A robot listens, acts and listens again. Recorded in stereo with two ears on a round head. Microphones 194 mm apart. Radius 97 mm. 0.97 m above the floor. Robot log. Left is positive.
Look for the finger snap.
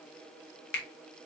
note: The finger snap: about 50° left or 130° left.
cmd yaw +50
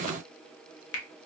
note: So it is at 75° left.
cmd yaw +75
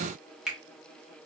end: Found it: a finger snap, straight ahead, under 1 m away.